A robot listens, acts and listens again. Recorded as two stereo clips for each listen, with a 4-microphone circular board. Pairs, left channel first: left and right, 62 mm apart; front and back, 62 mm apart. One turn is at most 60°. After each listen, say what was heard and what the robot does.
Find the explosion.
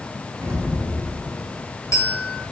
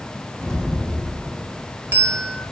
The explosion: 80° right. Turn 60° right.
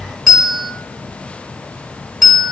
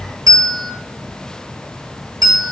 Nothing new. It was at 20° right. Turn 20° right.
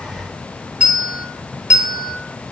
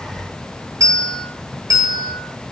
I heard an explosion from this way, but can't make it out now.